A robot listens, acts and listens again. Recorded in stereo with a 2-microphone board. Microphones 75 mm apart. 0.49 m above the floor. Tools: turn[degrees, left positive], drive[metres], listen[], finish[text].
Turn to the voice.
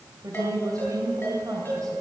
Thought: The woman speaking: about 55° right or 125° right.
Action: turn[-55]
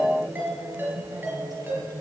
Thought: So it is at 70° right.
Action: turn[-70]
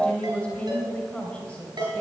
Thought: The woman speaking is now 20° left.
Action: turn[20]
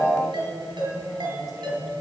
Action: listen[]
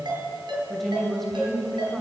Action: finish[Facing the woman speaking.]